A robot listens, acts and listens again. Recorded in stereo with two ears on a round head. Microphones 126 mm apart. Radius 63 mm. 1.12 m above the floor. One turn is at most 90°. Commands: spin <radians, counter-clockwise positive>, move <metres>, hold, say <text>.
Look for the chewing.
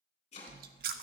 spin -1.22
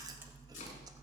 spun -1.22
spin -0.52
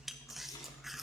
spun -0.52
say Found it: chewing, straight ahead, under 1 m away.